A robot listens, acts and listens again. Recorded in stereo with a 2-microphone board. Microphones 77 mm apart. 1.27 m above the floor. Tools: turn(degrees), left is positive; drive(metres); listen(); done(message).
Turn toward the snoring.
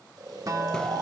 turn(degrees=-50)
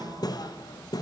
listen()
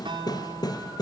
listen()
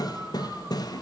done("I heard snoring, but can't make it out now. It was about straight ahead or 80° right.")